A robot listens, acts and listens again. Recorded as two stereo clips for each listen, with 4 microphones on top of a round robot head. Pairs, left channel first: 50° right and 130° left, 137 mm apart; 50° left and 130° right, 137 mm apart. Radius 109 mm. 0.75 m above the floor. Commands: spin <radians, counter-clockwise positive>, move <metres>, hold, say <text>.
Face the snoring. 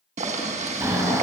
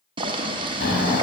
spin 1.05
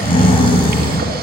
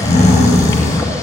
say Found it: snoring, straight ahead, 2 to 4 m away.